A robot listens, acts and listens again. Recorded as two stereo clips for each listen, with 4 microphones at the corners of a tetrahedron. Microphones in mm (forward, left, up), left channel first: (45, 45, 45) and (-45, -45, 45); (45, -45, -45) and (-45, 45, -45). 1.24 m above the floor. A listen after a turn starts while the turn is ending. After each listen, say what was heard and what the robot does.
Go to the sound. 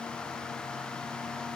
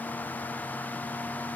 Keep listening.
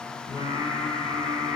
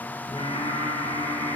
Drive 1.0 m forward.
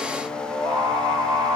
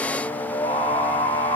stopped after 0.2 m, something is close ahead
Something is in my way. I am facing the singing but have not reached it.